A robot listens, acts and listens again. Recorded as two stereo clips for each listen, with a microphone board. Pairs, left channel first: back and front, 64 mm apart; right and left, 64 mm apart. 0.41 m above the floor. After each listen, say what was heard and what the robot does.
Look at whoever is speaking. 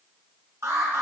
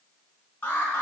Keep listening.
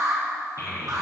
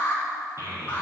The child speaking: 45° left. Turn 45° left.
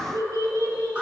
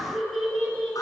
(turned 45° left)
Found it: a child speaking, straight ahead.